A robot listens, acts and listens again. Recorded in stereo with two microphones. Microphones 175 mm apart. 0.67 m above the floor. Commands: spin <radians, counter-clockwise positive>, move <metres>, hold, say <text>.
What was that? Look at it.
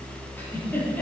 spin 0.52
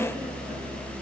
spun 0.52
hold
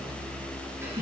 spin -0.26
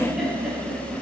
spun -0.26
say Found it: a giggle, straight ahead, over 4 m away.